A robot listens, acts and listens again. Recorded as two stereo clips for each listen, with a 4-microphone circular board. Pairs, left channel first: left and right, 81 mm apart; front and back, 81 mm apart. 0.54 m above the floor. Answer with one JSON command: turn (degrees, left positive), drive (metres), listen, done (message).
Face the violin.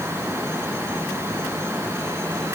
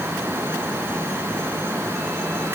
{"listen": true}
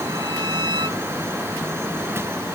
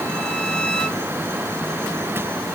{"turn": -75}
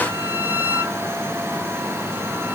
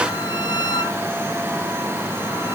{"turn": -25}
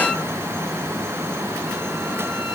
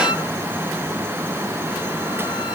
{"listen": true}
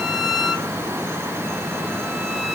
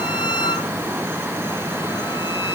{"done": "Facing the violin."}